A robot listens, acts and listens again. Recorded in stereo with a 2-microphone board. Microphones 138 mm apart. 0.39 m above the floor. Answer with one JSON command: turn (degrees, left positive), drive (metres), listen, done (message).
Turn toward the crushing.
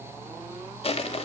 {"turn": 45}
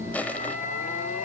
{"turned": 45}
{"turn": 10}
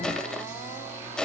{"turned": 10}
{"done": "Found it: crushing, straight ahead, 1 to 2 m away."}